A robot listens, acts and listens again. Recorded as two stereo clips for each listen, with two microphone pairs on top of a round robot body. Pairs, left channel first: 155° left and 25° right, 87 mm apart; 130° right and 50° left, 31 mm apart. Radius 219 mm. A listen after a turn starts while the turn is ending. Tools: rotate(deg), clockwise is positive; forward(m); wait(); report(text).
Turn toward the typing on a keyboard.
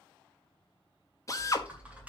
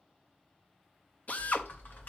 rotate(100)
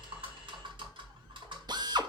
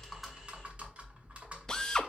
report("Facing the typing on a keyboard, 2 to 4 m away.")